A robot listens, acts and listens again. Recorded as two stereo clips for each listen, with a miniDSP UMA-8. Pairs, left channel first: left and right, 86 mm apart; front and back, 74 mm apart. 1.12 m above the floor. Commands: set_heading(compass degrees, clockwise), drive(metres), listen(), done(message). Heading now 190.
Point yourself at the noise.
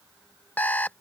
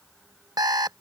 set_heading(30)
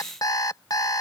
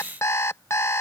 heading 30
set_heading(340)
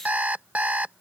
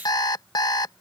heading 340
set_heading(0)
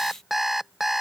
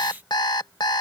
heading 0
done("Facing the alarm clock.")